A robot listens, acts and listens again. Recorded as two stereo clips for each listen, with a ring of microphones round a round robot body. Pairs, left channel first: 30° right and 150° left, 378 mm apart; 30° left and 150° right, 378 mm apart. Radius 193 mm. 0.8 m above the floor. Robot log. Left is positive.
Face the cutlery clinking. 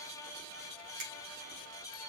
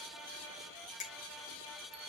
cmd idle
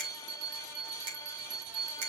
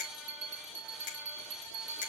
cmd idle
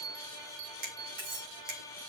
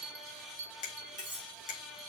note: The cutlery clinking: 140° left.
cmd yaw +140
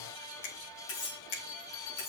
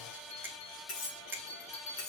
note: The cutlery clinking is now 25° right.
cmd yaw -25
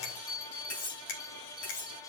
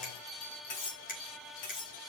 end: Facing the cutlery clinking.